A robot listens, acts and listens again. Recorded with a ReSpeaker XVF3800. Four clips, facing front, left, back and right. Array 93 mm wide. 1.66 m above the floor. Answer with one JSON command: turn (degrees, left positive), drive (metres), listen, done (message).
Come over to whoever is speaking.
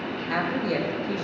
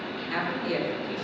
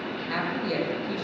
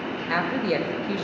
{"turn": -80}
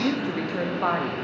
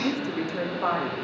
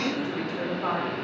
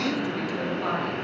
{"turn": 20}
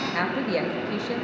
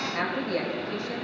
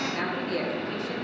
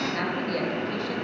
{"drive": 1.0}
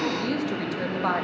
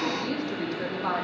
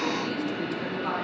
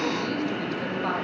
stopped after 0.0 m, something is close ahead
{"done": "Something is in my way. I am facing the woman speaking but have not reached it."}